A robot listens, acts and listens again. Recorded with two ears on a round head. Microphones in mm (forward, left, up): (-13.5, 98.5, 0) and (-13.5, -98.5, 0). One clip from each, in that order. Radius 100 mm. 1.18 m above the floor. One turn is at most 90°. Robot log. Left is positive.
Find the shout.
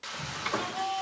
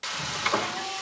note: The shout: about 45° left or 135° left.
cmd yaw +45
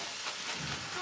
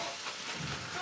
end: Found it: a shout, straight ahead, over 4 m away.